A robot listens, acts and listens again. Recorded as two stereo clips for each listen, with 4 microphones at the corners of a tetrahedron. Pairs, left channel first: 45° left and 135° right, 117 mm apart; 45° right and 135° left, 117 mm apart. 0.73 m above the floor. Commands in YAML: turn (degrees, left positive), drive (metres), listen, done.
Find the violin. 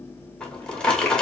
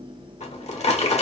listen: true
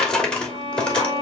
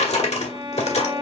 turn: 180
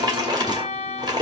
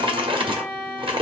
turn: 30
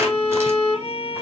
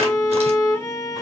turn: 15
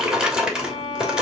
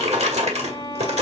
done: "Found it: a violin, straight ahead."